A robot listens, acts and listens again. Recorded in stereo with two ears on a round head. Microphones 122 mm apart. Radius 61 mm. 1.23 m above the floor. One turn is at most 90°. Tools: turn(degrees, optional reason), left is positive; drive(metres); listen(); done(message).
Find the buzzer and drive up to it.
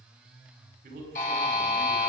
turn(degrees=60, reason="The buzzer: about 60° left or 120° left.")
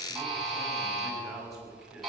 drive(metres=1.0)
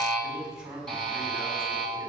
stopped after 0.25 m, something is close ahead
done("Blocked. The buzzer is further on, straight ahead.")